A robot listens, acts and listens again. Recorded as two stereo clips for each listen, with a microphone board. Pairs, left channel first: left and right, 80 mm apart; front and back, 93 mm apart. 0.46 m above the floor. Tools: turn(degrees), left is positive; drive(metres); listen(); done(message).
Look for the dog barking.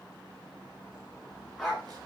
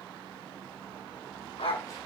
done("Facing the dog barking.")